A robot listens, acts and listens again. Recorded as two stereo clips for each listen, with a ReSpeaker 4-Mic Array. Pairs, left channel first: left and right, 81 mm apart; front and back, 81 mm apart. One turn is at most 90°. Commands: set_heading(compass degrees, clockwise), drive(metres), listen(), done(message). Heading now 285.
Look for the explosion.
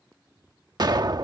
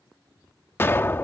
set_heading(345)
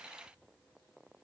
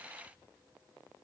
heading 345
done("Facing where the explosion came from. I can't hear it now.")